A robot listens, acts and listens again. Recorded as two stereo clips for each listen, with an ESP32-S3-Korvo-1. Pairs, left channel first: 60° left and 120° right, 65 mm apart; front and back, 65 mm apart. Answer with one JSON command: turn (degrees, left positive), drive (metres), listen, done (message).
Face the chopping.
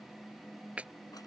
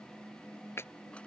{"turn": -50}
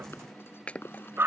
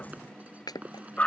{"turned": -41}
{"turn": -10}
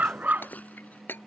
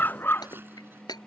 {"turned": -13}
{"done": "Found it: chopping, straight ahead."}